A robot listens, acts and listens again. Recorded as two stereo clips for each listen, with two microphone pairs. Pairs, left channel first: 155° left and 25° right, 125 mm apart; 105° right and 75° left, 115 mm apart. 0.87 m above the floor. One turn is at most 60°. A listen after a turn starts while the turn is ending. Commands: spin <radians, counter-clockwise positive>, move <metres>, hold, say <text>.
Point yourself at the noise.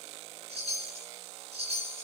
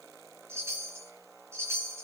spin 0.17
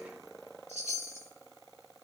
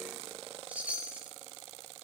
say Found it: a chime, straight ahead, over 4 m away.